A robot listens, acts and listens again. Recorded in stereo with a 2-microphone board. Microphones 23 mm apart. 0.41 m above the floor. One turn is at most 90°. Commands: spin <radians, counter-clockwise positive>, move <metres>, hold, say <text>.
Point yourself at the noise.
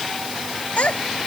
spin 1.13
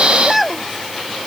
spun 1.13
say Facing the child speaking.